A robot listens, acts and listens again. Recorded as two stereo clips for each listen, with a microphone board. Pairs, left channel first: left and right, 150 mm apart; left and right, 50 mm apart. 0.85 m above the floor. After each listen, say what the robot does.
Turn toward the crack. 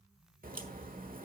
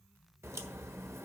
Turn 70° right.
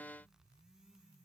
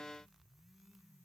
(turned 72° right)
Keep listening.
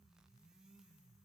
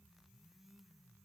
I heard a crack, but can't make it out now. It was about straight ahead or 35° right.